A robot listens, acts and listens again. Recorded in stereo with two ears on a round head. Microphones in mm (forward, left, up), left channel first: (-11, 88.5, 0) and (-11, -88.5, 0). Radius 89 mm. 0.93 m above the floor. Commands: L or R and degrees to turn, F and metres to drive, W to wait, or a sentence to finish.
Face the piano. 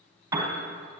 R30
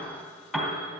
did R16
Facing the piano.